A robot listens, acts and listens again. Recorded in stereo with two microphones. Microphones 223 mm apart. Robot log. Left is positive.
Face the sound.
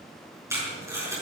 cmd yaw -30
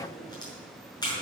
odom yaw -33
note: So it is at 20° left.
cmd yaw +20
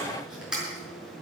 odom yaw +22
end: Found it: tape being pulled, straight ahead, over 4 m away.